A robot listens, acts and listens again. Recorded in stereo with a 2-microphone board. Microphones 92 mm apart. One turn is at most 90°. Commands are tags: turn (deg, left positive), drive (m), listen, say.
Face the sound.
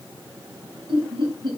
<turn deg="-70"/>
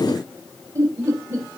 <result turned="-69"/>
<turn deg="-35"/>
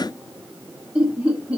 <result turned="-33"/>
<turn deg="-15"/>
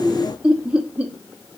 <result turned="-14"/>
<turn deg="-15"/>
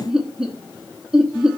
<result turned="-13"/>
<say>Found it: laughter, straight ahead.</say>